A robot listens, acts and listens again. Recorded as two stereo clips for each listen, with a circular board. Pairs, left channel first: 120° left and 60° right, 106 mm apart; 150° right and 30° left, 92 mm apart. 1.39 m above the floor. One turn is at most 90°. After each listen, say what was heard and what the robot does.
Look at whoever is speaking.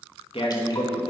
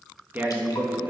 The man speaking: 95° left. Turn 90° left.
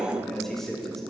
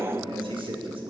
The man speaking is now 35° left. Turn 35° left.
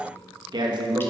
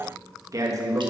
The man speaking is now 20° right. Turn 20° right.
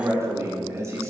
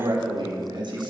Facing the man speaking.